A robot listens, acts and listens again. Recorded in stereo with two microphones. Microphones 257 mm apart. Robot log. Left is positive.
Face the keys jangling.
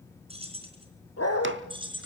note: The keys jangling: about 20° right or 160° right.
cmd yaw -20
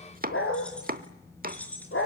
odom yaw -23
end: Found it: keys jangling, straight ahead, over 4 m away.